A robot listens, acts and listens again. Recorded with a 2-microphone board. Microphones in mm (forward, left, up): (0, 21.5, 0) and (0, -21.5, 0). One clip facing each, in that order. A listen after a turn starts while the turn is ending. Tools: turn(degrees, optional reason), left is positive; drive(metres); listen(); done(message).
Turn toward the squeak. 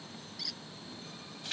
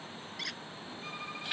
turn(degrees=-50, reason="The squeak: about 50° right or 130° right.")
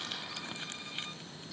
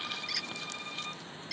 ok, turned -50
turn(degrees=-80, reason="So it is at 80° right.")
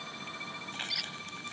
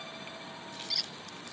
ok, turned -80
turn(degrees=15, reason="The squeak is now 15° left.")
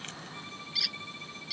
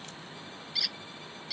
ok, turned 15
done("Found it: a squeak, straight ahead.")